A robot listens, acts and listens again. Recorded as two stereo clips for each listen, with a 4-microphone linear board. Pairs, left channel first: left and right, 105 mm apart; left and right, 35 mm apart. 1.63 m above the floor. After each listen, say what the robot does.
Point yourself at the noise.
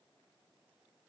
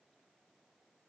Keep listening.
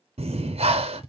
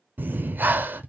Turn 90° right.
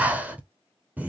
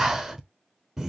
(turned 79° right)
Turn 15° right.
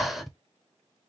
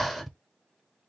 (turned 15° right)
Found it: breathing, straight ahead.